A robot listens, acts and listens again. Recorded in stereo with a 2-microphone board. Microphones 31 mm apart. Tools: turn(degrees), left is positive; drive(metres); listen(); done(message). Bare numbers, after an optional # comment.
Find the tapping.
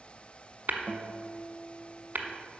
# The tapping: about 65° right or 115° right.
turn(-65)
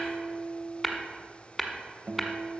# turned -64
done("Facing the tapping, 1 to 2 m away.")